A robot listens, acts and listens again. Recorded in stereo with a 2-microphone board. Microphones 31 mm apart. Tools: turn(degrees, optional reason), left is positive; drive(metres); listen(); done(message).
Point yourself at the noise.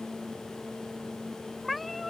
turn(degrees=30)
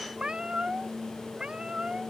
turn(degrees=-25, reason="So it is at 25° right.")
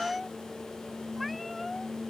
done("Found it: a cat meowing, straight ahead.")